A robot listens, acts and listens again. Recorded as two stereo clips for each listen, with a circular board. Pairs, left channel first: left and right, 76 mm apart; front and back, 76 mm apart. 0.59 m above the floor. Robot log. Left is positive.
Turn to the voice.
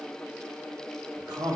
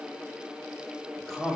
note: The man speaking: 90° right.
cmd yaw -90
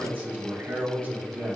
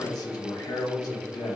note: The man speaking is now 25° right.
cmd yaw -25
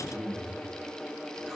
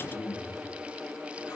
end: Found it: a man speaking, straight ahead, 1 to 2 m away.